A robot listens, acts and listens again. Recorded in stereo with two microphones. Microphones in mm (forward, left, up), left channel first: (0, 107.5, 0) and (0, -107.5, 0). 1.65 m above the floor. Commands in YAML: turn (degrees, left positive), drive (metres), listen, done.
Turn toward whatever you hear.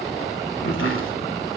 turn: 90
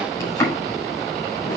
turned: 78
turn: 10
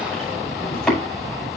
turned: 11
done: "Found it: chopping, straight ahead."